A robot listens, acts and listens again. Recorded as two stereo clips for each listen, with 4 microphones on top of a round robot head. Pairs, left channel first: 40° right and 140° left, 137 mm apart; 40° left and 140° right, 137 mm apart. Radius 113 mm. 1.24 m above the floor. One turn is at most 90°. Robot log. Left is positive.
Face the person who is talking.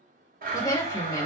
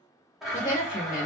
note: The woman speaking: 25° left.
cmd yaw +25
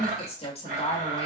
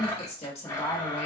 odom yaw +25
end: Found it: a woman speaking, straight ahead, 1 to 2 m away.